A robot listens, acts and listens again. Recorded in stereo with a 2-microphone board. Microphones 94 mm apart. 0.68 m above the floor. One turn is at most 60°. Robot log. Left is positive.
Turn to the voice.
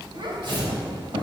note: The child speaking: about 60° right or 120° right.
cmd yaw -60
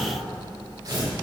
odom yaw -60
cmd idle
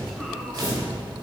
cmd idle
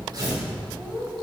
end: Facing the child speaking.